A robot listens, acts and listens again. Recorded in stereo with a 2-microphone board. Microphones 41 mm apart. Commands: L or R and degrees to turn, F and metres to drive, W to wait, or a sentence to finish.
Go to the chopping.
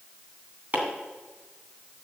R40
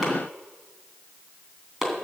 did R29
R10
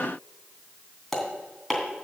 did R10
F1.0
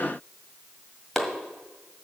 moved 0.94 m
F1.0
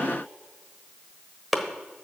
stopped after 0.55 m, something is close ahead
I am next to the chopping.